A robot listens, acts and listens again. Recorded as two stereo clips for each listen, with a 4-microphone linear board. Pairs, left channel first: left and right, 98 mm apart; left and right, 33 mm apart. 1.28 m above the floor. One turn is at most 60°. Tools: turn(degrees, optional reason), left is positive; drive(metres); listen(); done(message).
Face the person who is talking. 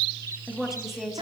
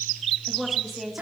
turn(degrees=-30)
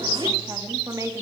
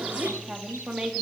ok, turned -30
turn(degrees=-60, reason="So it is at 145° right.")
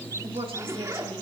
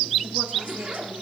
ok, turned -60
turn(degrees=-60, reason="Nothing new. It was at 85° right.")
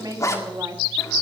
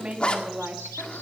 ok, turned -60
turn(degrees=-40, reason="The woman speaking is now 40° right.")
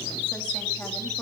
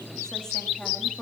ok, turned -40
listen()
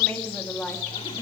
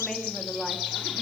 turn(degrees=15, reason="The woman speaking is now 15° left.")
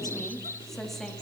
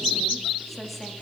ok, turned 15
done("Found it: a woman speaking, straight ahead, 2 to 4 m away.")